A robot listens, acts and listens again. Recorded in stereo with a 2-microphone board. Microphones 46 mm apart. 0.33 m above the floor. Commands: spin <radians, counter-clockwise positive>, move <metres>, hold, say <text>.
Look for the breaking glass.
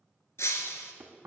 spin 1.57
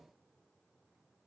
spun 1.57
say Facing where the breaking glass came from. I can't hear it now.